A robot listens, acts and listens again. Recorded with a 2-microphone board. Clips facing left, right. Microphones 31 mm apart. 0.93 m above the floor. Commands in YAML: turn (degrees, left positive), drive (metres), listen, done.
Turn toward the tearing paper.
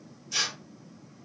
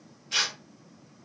turn: -50
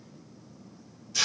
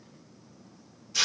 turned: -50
turn: -10
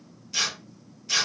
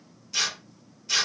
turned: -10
done: "Facing the tearing paper, under 1 m away."